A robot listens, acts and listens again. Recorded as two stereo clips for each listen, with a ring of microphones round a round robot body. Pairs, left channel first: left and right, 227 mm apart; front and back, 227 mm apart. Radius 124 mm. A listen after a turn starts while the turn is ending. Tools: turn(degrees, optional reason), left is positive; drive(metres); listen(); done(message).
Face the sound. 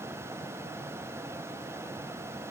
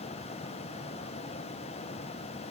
listen()
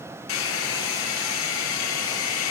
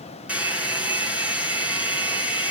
turn(degrees=95, reason="The hair dryer: 95° left.")
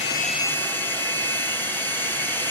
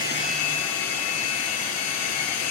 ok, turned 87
turn(degrees=10, reason="The hair dryer is now 10° left.")
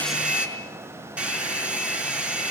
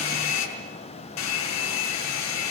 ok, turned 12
done("Facing the hair dryer.")